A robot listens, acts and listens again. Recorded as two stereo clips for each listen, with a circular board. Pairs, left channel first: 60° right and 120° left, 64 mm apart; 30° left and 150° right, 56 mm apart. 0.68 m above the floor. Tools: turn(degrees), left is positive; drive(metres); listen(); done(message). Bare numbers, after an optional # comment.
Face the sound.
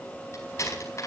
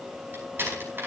# The door slam: 100° right.
turn(-100)
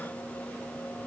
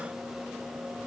done("I heard a door slam from this way, but can't make it out now.")